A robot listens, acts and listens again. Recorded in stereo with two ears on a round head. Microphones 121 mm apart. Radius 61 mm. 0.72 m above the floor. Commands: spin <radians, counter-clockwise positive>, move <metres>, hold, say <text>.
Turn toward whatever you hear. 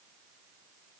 hold
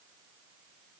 hold
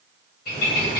spin 1.57
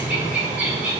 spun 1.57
spin -0.17
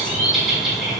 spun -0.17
say Found it: a bird, straight ahead.